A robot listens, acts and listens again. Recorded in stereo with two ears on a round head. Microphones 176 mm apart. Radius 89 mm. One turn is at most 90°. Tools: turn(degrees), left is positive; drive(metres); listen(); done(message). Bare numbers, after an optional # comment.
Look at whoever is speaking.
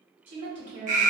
# The woman speaking: about 35° right or 145° right.
turn(-35)
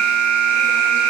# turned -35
listen()
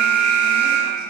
listen()
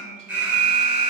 done("I heard a woman speaking, but can't make it out now. It was about straight ahead or 110° right.")